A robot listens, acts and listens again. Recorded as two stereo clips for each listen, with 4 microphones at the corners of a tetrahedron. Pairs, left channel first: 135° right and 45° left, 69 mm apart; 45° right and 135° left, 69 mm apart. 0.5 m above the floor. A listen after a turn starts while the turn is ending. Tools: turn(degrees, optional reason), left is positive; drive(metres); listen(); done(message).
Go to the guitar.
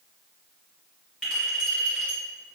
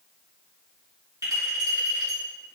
listen()
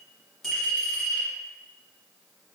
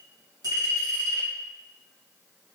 listen()
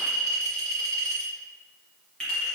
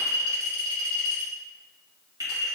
done("I can't make out a guitar to turn to.")